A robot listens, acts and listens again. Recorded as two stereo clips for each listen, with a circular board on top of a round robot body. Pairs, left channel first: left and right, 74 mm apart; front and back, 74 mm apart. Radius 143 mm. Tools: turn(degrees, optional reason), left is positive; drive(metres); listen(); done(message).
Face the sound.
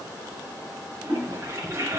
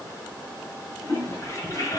turn(degrees=-40, reason="The toilet flushing: 40° right.")
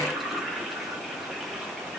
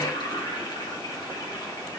done("Found it: a toilet flushing, straight ahead, 1 to 2 m away.")